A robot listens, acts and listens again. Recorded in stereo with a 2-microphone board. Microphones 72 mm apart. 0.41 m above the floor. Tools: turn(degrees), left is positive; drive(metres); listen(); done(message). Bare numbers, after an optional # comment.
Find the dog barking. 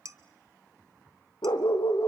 turn(90)
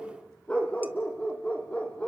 # So it is at 20° left.
turn(20)
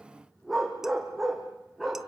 done("Facing the dog barking.")